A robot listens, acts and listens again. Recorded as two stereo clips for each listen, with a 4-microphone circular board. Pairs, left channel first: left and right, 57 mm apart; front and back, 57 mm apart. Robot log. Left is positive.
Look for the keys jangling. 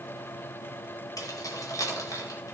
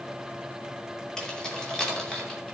note: The keys jangling: 80° left.
cmd yaw +80
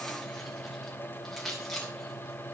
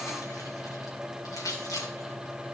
end: Facing the keys jangling, 2 to 4 m away.